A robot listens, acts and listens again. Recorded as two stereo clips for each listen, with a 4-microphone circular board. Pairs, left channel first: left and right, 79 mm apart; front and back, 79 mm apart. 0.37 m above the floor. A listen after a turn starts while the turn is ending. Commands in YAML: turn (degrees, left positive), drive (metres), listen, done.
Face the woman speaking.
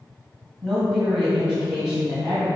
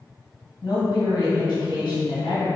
turn: -15
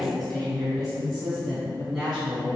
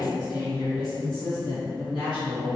done: "Facing the woman speaking."